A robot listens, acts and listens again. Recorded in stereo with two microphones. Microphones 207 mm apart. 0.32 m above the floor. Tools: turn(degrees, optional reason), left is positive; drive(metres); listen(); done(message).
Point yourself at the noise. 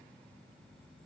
listen()
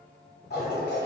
turn(degrees=50, reason="The toilet flushing: about 50° left or 130° left.")
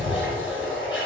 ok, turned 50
turn(degrees=75, reason="So it is at 75° left.")
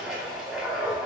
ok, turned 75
done("Facing the toilet flushing, 1 to 2 m away.")